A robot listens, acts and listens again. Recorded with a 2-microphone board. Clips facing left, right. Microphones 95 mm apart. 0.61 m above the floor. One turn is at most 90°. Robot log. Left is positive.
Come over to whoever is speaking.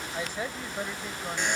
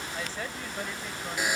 note: The woman speaking: about 15° left or 165° left.
cmd yaw +15
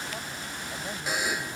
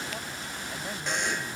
cmd idle
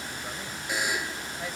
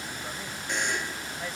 cmd fwd 1.0
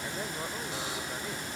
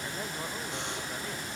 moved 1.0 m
cmd idle
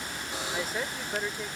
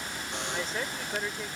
cmd fwd 1.0
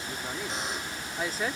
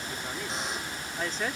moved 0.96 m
note: The woman speaking is now 10° left.
cmd yaw +10
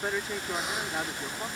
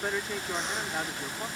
cmd fwd 1.0
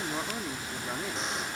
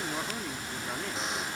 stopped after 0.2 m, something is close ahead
note: The woman speaking is now 10° left.
cmd yaw +10
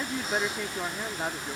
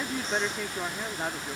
end: Arrived at the woman speaking, straight ahead.